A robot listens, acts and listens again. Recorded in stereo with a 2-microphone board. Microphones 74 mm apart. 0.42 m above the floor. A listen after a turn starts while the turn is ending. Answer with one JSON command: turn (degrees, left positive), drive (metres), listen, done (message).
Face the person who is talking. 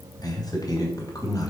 {"turn": 50}
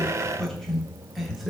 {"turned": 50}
{"done": "Found it: a man speaking, straight ahead."}